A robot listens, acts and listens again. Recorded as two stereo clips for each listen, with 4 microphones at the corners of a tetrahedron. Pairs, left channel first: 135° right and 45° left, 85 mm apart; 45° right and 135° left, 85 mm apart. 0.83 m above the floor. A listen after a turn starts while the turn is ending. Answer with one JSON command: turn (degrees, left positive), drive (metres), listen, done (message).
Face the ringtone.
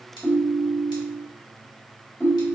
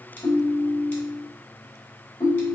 {"turn": -70}
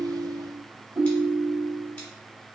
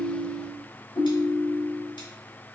{"turn": -20}
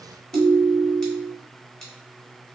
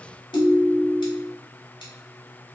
{"turn": -10}
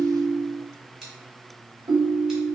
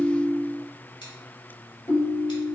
{"done": "Facing the ringtone, under 1 m away."}